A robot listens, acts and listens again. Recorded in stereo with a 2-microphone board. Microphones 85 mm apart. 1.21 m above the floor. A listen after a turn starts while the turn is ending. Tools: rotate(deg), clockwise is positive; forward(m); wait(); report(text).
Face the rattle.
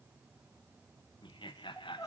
wait()
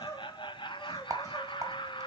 rotate(40)
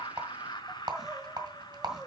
rotate(85)
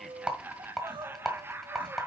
report("Found it: a rattle, straight ahead, 1 to 2 m away.")